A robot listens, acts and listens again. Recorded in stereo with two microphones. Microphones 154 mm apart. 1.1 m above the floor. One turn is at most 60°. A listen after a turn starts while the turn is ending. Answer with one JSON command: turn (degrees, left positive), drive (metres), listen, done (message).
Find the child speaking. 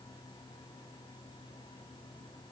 {"listen": true}
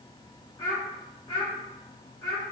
{"turn": 25}
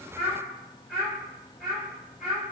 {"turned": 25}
{"done": "Facing the child speaking, over 4 m away."}